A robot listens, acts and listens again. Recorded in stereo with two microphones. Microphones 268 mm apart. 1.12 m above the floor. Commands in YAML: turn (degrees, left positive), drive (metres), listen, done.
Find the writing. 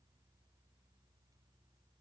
listen: true
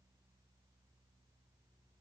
listen: true
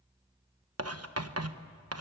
turn: -65
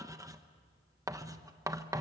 turn: -15
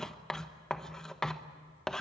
done: "Facing the writing, 1 to 2 m away."